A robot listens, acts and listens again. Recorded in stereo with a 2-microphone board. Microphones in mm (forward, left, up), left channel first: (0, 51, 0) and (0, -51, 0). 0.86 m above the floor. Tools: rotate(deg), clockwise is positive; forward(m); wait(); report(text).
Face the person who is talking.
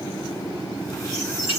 wait()
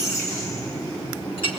wait()
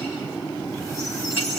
report("I can't make out anyone speaking to turn to.")